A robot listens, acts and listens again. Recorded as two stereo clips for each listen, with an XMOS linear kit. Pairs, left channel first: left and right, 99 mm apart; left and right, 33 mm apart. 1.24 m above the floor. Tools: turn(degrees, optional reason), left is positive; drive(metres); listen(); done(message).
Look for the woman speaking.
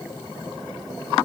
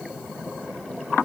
listen()
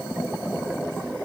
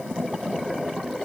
listen()
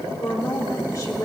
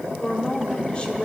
turn(degrees=35, reason="The woman speaking: about 35° left or 145° left.")
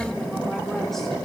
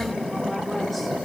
listen()
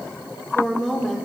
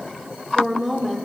done("Facing the woman speaking, 1 to 2 m away.")